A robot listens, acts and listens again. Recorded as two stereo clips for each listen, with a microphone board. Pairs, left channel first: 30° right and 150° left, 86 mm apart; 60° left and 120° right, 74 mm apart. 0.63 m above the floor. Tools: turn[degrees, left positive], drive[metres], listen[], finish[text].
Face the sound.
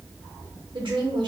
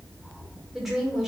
Thought: The woman speaking: 155° left.
Action: turn[155]
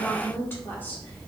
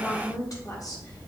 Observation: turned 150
Thought: The woman speaking is now 30° left.
Action: turn[30]
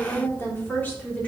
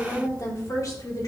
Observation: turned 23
Thought: The woman speaking is now 40° left.
Action: turn[40]
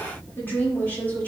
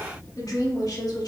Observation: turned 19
Thought: The woman speaking is now 40° left.
Action: turn[40]
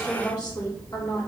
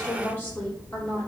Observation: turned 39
Action: finish[Found it: a woman speaking, straight ahead, 1 to 2 m away.]